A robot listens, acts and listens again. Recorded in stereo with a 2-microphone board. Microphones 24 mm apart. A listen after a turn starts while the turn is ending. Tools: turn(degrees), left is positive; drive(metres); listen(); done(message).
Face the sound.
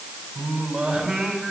turn(degrees=-25)
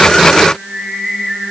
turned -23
done("Facing the singing.")